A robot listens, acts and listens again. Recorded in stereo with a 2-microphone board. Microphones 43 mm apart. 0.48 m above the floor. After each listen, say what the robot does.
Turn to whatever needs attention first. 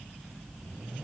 Keep listening.
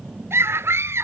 Turn 90° right.
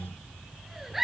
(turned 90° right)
Found it: a scream, straight ahead.